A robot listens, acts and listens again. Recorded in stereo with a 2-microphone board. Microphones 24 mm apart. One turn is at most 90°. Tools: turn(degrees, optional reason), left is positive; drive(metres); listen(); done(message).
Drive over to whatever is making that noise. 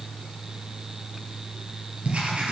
turn(degrees=-55, reason="The writing: about 55° right or 125° right.")
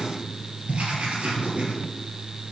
turn(degrees=-70, reason="So it is at 70° right.")
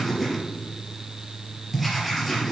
drive(metres=1.0)
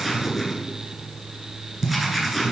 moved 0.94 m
drive(metres=1.0)
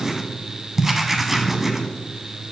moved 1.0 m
turn(degrees=-15, reason="The writing is now 15° right.")
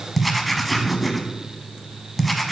drive(metres=1.0)
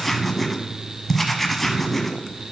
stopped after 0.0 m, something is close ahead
done("Arrived at the writing, straight ahead.")